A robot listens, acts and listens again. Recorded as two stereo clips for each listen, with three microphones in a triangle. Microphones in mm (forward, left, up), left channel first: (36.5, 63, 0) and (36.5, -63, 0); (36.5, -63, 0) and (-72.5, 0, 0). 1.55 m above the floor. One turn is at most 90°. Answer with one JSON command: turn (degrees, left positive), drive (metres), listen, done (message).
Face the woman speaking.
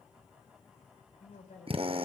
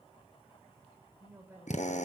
{"turn": 75}
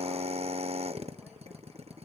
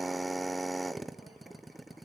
{"listen": true}
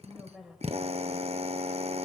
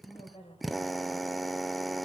{"done": "Facing the woman speaking."}